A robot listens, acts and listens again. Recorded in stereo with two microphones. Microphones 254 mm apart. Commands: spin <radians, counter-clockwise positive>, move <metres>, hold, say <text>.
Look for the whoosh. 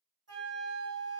hold
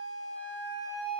hold
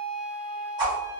spin -0.26
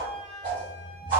spin -2.62
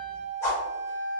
spin 0.17
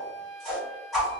say Found it: a whoosh, straight ahead.